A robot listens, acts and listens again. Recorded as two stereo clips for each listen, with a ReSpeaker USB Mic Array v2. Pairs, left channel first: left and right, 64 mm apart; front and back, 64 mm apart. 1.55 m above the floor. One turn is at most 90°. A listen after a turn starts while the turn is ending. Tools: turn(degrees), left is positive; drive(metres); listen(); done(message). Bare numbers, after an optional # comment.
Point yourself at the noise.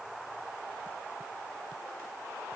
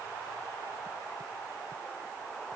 listen()
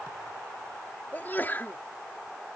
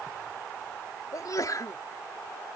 # The sneeze: 30° left.
turn(30)
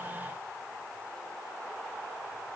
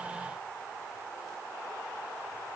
done("I heard a sneeze from this way, but can't make it out now.")